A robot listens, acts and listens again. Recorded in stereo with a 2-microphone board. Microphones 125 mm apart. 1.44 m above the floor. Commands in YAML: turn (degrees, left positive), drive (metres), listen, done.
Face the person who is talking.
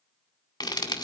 listen: true
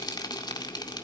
listen: true
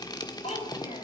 turn: 60
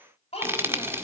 turn: 55
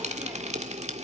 listen: true
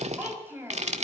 turn: -15
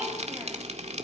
listen: true
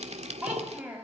turn: -10
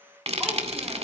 listen: true
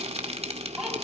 done: "Facing the child speaking."